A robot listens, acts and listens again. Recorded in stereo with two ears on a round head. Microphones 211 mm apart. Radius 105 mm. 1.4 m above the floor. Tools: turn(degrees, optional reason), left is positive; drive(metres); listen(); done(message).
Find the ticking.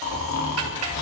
turn(degrees=-70, reason="The ticking: about 70° right or 110° right.")
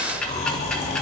done("Facing the ticking.")